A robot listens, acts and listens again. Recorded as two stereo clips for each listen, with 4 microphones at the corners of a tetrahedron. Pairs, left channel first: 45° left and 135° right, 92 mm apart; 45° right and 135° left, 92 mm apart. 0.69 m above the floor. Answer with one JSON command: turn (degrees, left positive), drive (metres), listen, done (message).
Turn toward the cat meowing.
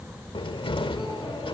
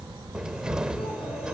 {"listen": true}
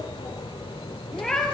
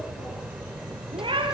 {"turn": 130}
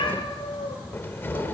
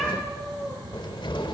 {"listen": true}
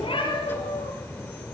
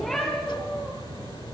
{"listen": true}
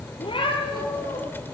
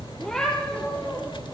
{"turn": 40}
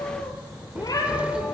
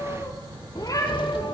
{"done": "Found it: a cat meowing, straight ahead."}